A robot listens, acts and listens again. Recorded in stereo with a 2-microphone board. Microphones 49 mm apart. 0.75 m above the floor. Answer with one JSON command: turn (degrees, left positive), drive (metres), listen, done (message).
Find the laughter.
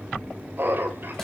{"turn": -50}
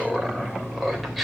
{"done": "Found it: laughter, straight ahead, 2 to 4 m away."}